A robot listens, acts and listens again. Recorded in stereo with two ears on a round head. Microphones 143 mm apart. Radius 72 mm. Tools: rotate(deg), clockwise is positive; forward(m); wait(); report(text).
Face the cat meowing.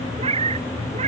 rotate(40)
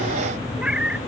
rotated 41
report("Found it: a cat meowing, straight ahead.")